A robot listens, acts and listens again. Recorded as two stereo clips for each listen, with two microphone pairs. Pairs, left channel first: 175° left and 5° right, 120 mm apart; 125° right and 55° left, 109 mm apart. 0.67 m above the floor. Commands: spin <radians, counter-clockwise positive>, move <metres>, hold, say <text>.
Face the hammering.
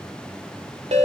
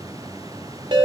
hold
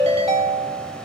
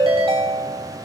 hold
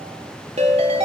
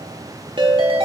say I can't make out hammering, only a ringtone.